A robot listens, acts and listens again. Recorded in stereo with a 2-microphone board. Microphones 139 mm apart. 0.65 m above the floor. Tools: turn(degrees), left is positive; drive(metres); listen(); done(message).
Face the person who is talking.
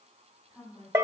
turn(degrees=30)
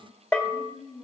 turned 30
turn(degrees=145)
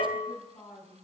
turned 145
turn(degrees=25)
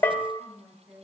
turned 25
turn(degrees=-10)
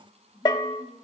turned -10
done("Found it: a woman speaking, straight ahead.")